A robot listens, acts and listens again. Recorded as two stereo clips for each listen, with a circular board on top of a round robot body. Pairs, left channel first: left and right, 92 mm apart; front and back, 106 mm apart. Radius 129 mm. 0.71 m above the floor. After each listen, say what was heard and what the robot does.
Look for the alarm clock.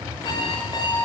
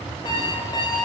The alarm clock: 50° left. Turn 50° left.
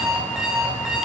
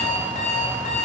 Facing the alarm clock.